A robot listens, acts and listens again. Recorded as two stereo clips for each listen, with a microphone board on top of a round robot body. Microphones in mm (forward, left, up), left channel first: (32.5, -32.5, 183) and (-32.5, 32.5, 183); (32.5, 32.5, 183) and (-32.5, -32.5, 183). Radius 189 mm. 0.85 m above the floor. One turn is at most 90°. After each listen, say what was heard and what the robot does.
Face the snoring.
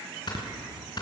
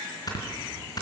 Facing the snoring, 2 to 4 m away.